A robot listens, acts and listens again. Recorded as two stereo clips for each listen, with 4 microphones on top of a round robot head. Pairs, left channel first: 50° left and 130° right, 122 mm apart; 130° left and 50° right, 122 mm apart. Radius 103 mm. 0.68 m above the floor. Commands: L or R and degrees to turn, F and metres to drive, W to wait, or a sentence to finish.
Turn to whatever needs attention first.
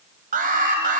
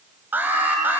R125
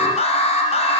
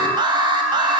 L10
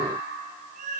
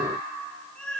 W
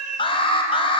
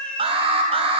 Facing the alarm, 2 to 4 m away.